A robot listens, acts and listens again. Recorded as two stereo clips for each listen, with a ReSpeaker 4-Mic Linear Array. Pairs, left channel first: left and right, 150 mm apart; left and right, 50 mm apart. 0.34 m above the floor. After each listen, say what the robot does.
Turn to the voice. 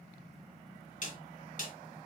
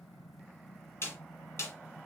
Keep listening.
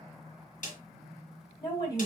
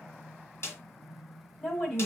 Turn 25° left.
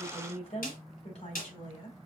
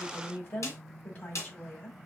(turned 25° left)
Turn 130° left.
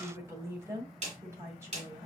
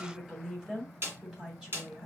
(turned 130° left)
Turn 20° right.
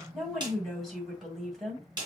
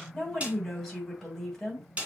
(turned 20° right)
Facing the woman speaking, 2 to 4 m away.